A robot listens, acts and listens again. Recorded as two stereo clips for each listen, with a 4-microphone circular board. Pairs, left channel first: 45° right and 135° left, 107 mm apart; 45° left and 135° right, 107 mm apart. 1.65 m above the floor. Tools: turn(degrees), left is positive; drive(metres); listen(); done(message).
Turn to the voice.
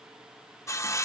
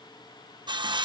listen()
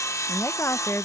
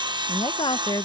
turn(degrees=15)
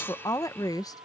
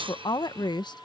done("Facing the woman speaking.")